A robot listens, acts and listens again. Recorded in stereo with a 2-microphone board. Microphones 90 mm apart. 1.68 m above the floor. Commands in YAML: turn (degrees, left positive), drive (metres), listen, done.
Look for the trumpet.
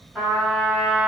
turn: -30
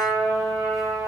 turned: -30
turn: -145
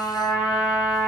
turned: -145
done: "Facing the trumpet."